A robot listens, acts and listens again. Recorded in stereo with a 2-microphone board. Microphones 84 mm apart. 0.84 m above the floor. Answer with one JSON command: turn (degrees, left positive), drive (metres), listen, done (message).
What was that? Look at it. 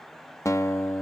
{"turn": 35}
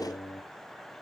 {"turn": 105}
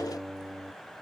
{"done": "Found it: a guitar, straight ahead."}